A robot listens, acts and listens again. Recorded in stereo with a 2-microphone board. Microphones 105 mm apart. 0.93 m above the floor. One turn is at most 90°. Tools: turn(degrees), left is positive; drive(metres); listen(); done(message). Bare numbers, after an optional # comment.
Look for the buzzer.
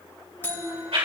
# The buzzer: about 20° left or 160° left.
turn(20)
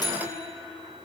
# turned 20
# So it is at 140° left.
turn(90)
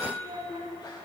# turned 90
# The buzzer is now 30° left.
turn(30)
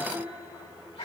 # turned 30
listen()
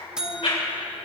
done("Found it: a buzzer, straight ahead, under 1 m away.")